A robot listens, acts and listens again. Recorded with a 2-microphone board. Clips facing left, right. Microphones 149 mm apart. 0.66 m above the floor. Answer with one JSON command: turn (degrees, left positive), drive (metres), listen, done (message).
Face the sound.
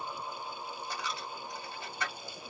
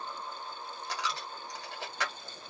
{"turn": -90}
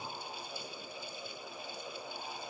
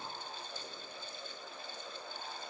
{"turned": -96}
{"done": "I heard a dropped coin from this way, but can't make it out now."}